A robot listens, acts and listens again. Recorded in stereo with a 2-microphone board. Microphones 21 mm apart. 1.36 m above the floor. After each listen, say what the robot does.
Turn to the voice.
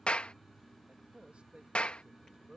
Turn 90° right.
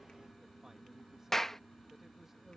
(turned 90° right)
Keep listening.
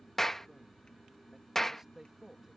Turn 20° right.
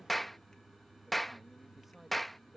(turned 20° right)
Turn 10° right.
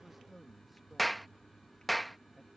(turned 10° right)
Found it: a man speaking, straight ahead.